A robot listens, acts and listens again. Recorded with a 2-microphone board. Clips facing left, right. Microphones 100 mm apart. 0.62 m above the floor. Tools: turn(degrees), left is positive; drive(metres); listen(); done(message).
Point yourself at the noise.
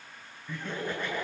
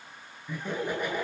turn(degrees=-30)
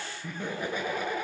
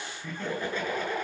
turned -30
turn(degrees=10)
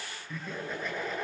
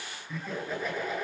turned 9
done("Facing the laughter.")